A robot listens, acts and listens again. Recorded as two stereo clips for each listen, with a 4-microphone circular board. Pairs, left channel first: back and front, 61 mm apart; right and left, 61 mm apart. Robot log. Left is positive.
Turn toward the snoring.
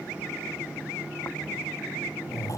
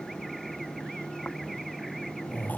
note: The snoring: 150° right.
cmd yaw -150
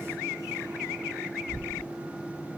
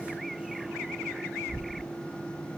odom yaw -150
note: The snoring is now 20° left.
cmd yaw +20
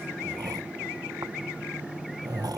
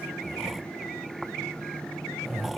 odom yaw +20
end: Found it: snoring, straight ahead.